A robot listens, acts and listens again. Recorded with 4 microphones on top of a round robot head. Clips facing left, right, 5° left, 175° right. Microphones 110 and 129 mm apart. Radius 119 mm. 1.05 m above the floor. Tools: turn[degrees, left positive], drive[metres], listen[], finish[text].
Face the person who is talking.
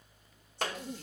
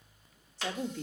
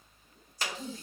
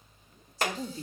Thought: The woman speaking: 105° right.
Action: turn[-105]
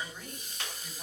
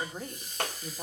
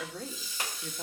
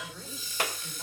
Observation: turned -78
Thought: The woman speaking is now 30° right.
Action: turn[-30]
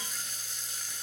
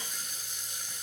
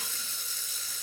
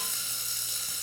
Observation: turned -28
Action: listen[]
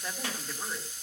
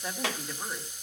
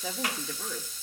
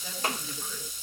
Action: listen[]
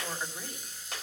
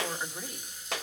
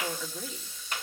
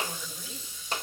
Action: finish[I heard a woman speaking from this way, but can't make it out now.]